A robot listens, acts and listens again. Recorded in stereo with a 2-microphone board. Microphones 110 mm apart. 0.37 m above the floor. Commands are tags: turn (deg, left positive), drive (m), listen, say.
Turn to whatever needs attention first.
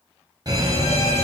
<turn deg="-35"/>
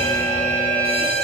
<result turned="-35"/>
<turn deg="-100"/>
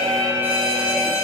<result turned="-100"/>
<turn deg="-20"/>
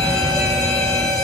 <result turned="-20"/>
<say>Found it: a fire alarm, straight ahead.</say>